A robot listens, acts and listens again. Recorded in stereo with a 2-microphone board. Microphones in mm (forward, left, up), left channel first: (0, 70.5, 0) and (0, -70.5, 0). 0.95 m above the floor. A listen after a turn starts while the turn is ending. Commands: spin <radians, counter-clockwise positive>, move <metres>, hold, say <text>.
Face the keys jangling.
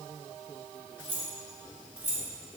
spin -0.52
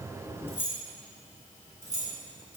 spin 0.26
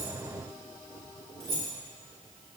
say Facing the keys jangling.